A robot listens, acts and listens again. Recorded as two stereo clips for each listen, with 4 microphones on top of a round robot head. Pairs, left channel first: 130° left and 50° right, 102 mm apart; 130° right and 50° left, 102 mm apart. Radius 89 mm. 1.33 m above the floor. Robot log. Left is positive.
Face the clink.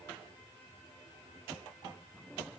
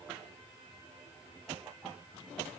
cmd idle
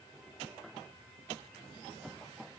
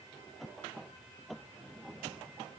cmd idle
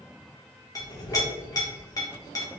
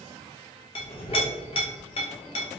note: The clink: 170° right.
cmd yaw -170
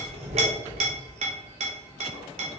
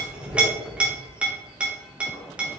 note: The clink is now 30° right.
cmd yaw -30
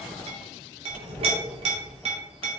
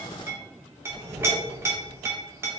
note: The clink is now 20° right.
cmd yaw -20
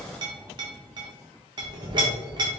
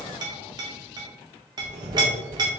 end: Facing the clink.